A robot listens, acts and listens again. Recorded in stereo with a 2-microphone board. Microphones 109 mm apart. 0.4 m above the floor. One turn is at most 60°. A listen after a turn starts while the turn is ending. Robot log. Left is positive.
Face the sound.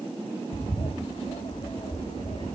note: The bird: about 65° left or 115° left.
cmd yaw +60
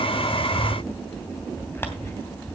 note: So it is at 20° left.
cmd yaw +20
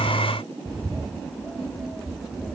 end: Found it: a bird, straight ahead.